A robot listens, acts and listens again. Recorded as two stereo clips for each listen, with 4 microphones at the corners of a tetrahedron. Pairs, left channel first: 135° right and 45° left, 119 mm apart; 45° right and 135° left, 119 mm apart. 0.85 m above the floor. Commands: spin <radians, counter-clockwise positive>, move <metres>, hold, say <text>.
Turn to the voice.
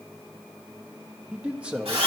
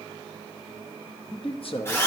spin -0.52
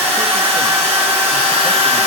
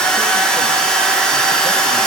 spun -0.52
hold
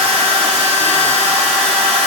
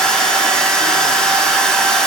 hold
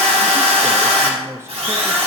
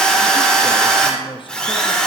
spin -0.26
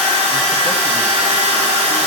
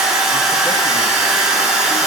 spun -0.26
hold
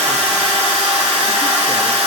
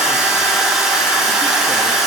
hold
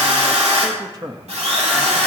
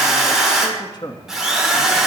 say Found it: a man speaking, straight ahead.